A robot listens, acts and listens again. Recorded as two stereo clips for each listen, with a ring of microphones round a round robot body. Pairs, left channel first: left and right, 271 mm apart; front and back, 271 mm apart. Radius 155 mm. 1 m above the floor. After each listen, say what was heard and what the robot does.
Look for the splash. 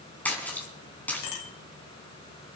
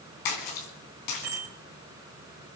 Facing the splash.